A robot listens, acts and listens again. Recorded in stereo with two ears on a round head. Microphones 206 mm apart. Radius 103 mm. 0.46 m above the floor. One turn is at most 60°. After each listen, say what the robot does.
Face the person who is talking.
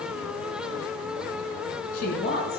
Turn 40° left.
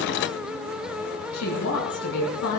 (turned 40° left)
Turn 60° left.
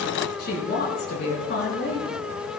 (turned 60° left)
Turn 50° left.
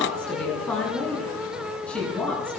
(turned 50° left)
Facing the woman speaking, over 4 m away.